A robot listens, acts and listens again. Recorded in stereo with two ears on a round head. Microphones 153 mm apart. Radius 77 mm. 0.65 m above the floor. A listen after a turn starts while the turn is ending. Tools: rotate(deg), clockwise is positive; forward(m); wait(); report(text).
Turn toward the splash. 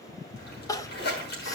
rotate(-60)
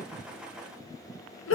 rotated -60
wait()
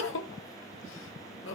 report("I heard a splash, but can't make it out now. It was about straight ahead or 60° left.")